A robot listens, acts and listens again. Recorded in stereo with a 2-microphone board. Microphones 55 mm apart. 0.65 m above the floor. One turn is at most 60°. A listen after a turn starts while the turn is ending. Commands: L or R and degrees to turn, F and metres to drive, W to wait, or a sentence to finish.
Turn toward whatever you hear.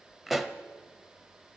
R30
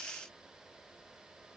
W
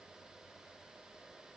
I heard a pop, but can't make it out now. It was about 25° left or 145° right.